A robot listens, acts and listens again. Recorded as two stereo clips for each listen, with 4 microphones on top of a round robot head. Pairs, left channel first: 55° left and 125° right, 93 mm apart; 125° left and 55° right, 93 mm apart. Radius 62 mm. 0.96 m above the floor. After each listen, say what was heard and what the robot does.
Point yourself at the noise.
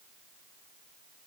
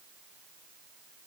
Keep listening.
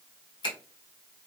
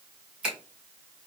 The finger snap: 20° left. Turn 20° left.
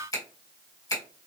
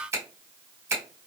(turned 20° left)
Found it: a finger snap, straight ahead, 1 to 2 m away.